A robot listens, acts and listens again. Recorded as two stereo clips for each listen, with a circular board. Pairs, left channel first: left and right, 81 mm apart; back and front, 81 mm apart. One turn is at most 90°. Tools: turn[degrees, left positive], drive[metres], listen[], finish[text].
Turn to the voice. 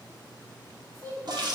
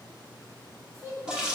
Thought: The child speaking: 45° right.
Action: turn[-45]
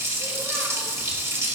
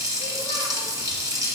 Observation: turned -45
Action: listen[]
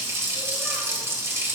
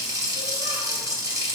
Action: listen[]
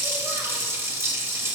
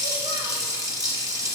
Action: finish[I heard a child speaking from this way, but can't make it out now.]